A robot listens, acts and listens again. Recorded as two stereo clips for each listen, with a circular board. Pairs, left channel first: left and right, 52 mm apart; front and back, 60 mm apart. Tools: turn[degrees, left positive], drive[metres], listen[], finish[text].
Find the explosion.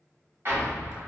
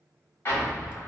Thought: The explosion: 50° right.
Action: turn[-50]
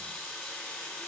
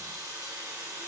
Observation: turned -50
Action: finish[I heard an explosion from this way, but can't make it out now.]